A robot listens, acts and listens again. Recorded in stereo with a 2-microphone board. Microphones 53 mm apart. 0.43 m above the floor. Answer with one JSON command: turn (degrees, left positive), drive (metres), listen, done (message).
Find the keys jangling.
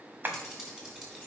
{"turn": -30}
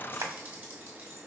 {"turn": -135}
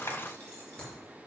{"turn": 30}
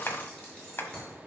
{"turn": 20}
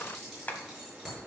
{"done": "Facing the keys jangling."}